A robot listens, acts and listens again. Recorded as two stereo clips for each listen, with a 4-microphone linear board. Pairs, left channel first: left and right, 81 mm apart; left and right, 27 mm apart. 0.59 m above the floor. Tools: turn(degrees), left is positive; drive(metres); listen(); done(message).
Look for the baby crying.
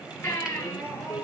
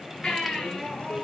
turn(degrees=30)
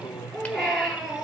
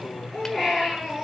done("Facing the baby crying, over 4 m away.")